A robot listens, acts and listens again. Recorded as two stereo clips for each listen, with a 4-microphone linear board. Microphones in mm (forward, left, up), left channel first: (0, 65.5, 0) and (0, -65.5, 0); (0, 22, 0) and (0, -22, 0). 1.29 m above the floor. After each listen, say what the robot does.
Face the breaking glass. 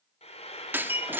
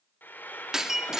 Turn 30° right.
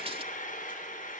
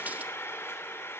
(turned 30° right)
Keep listening.
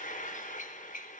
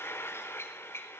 I heard breaking glass, but can't make it out now. It was about 15° left or 135° right.